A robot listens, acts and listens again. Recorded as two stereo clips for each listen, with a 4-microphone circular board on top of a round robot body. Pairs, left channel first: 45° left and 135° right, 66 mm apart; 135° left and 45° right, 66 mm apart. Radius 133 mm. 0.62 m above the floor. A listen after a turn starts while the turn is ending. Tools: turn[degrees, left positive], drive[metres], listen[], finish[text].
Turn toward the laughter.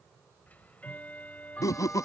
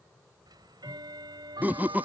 Thought: The laughter: 20° left.
Action: turn[20]
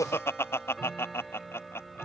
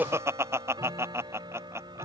Action: finish[Facing the laughter.]